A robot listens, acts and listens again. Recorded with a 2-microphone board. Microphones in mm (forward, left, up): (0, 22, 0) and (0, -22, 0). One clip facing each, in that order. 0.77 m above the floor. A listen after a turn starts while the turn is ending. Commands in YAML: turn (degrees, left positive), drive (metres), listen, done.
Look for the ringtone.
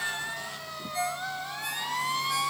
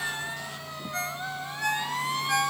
turn: -90
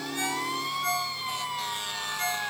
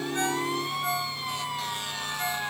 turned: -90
done: "Found it: a ringtone, straight ahead, over 4 m away."